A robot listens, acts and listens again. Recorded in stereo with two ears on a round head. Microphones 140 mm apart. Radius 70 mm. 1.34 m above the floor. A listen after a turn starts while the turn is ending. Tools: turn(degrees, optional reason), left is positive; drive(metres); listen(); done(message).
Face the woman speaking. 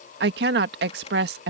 turn(degrees=-75, reason="The woman speaking: about 75° right or 105° right.")
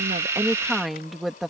done("Facing the woman speaking.")